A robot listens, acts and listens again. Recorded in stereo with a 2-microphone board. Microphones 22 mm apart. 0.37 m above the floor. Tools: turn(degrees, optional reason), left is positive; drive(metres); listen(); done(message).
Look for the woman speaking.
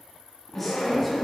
turn(degrees=30)
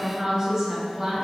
turn(degrees=-15, reason="So it is at 15° right.")
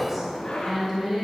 done("Facing the woman speaking, 2 to 4 m away.")